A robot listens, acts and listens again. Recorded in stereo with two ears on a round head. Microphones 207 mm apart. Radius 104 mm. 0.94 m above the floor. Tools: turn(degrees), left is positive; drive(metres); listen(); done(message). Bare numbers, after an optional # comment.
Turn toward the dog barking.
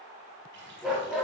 turn(30)
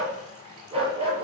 # So it is at 25° right.
turn(-25)
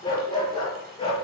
# The dog barking is now 25° left.
turn(25)
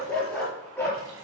done("Found it: a dog barking, straight ahead.")